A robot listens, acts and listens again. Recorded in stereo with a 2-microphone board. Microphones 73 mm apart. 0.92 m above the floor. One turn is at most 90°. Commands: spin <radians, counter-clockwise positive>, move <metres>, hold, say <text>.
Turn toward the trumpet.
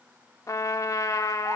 spin 0.87
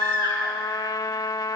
spin 1.22
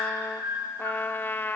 spin 0.52
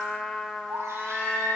say Facing the trumpet, under 1 m away.